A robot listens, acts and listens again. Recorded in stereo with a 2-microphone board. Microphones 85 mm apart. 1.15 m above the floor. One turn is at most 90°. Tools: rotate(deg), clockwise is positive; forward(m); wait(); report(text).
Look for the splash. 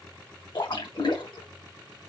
rotate(-65)
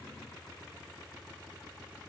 wait()
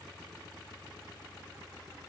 report("I heard a splash, but can't make it out now. It was about straight ahead or 50° left.")